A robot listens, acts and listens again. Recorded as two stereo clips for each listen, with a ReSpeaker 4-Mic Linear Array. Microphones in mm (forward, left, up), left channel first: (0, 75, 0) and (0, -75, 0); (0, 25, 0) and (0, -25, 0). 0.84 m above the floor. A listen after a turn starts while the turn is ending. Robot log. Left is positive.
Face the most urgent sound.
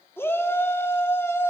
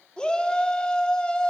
note: The shout: about 15° left or 165° left.
cmd yaw +15
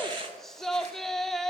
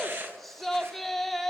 end: Facing the shout, 2 to 4 m away.